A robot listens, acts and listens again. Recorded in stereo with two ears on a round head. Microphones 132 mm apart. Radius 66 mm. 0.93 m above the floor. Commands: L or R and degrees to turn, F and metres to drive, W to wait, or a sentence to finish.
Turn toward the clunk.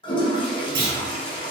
R70
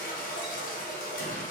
W
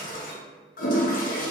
I heard a clunk, but can't make it out now. It was about straight ahead or 40° right.